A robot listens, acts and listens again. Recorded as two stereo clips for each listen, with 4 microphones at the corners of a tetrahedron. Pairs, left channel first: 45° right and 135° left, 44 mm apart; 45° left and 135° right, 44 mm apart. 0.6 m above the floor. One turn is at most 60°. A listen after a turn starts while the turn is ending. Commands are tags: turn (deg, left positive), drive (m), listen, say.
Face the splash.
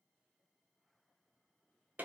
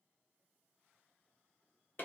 <listen/>
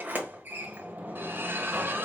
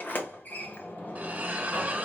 <turn deg="60"/>
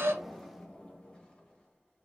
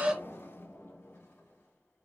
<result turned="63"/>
<turn deg="60"/>
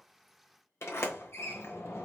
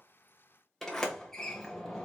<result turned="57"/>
<turn deg="50"/>
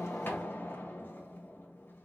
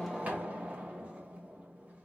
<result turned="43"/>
<say>Facing where the splash came from. I can't hear it now.</say>